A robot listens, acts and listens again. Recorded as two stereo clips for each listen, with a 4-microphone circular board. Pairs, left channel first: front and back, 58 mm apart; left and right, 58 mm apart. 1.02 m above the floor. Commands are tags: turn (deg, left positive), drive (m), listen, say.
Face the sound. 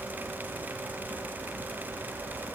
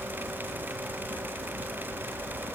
<listen/>
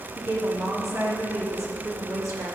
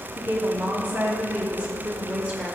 <turn deg="-155"/>
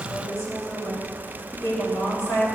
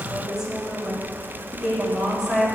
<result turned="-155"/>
<turn deg="-15"/>
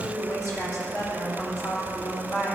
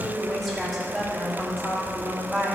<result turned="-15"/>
<say>Facing the woman speaking, 2 to 4 m away.</say>